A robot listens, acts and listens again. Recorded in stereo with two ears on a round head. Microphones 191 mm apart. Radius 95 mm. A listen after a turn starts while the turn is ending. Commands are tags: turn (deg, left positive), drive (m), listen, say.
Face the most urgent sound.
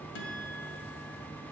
<listen/>
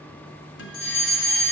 <turn deg="60"/>
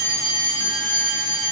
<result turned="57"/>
<turn deg="20"/>
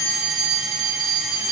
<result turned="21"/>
<say>Found it: a fire alarm, straight ahead, 2 to 4 m away.</say>